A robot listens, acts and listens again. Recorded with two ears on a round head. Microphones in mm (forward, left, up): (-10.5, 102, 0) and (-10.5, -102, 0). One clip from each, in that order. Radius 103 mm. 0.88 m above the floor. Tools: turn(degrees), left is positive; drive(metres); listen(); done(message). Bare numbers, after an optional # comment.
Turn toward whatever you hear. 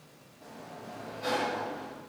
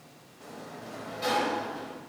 # The sliding door: about 70° right or 110° right.
turn(-70)
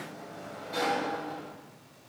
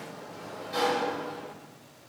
# So it is at 10° right.
turn(-10)
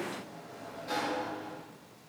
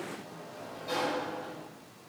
done("Facing the sliding door, 1 to 2 m away.")